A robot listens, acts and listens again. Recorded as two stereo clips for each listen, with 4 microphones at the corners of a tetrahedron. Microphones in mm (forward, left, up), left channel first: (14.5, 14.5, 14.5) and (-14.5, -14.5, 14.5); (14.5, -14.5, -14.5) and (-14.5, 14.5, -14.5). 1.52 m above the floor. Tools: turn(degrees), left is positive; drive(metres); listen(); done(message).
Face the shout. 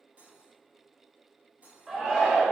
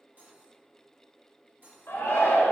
turn(degrees=-70)
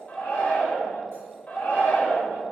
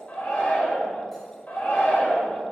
turn(degrees=-15)
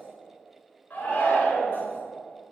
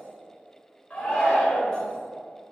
done("Facing the shout, 1 to 2 m away.")